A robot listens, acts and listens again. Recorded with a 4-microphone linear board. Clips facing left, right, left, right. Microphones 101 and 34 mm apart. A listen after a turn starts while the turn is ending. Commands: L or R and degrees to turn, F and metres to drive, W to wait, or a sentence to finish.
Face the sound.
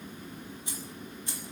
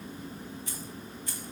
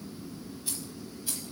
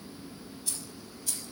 L25
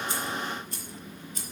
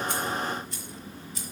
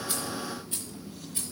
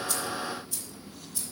L130
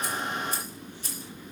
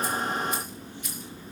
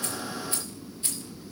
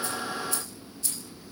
L35
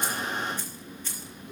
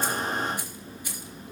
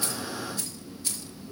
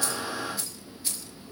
R15
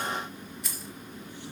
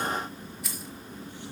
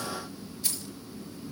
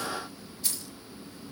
Facing the keys jangling, over 4 m away.